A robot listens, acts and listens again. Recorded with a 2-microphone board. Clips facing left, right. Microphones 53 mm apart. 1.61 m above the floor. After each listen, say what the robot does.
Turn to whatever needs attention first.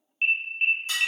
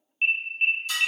Turn 30° left.
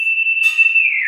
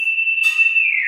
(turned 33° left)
Turn 145° left.
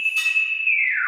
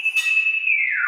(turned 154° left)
Facing the alarm, under 1 m away.